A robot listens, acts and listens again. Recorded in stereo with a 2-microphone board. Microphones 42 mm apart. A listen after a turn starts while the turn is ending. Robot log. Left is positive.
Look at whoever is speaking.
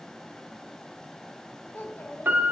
note: The child speaking: about 55° left or 125° left.
cmd yaw +55
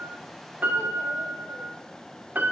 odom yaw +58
cmd idle
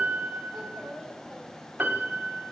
end: Facing the child speaking, 2 to 4 m away.